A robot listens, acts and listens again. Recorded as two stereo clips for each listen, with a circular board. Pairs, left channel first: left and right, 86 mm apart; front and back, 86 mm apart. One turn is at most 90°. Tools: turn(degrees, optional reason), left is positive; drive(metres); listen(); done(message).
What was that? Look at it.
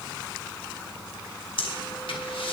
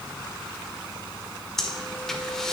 turn(degrees=85, reason="The breathing: 85° left.")
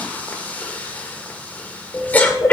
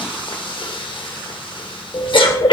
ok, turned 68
turn(degrees=20, reason="The breathing is now 20° left.")
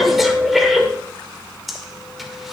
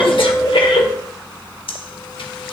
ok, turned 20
done("Found it: breathing, straight ahead.")